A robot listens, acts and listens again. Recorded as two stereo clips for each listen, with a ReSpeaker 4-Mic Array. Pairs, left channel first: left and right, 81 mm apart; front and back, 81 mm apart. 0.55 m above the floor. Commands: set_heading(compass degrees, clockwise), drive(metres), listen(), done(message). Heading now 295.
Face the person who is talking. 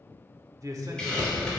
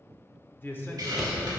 set_heading(350)
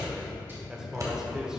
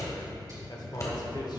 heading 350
set_heading(0)
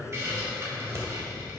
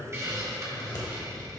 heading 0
done("Facing the man speaking.")